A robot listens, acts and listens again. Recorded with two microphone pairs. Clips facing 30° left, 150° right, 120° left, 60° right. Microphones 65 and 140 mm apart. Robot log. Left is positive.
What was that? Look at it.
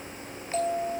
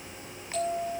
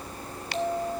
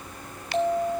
note: The bell: 20° right.
cmd yaw -20
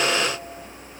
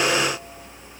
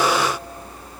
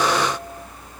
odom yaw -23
cmd idle
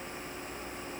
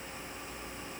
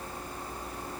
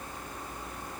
cmd idle
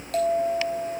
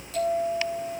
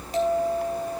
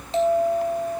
end: Facing the bell, 2 to 4 m away.